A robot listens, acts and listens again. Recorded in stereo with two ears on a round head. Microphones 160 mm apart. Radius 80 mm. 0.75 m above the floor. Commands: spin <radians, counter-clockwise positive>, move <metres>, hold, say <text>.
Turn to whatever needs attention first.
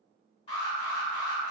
spin 0.61
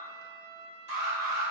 spin 1.75
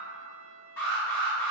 spin 0.26
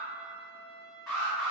say Facing the alarm.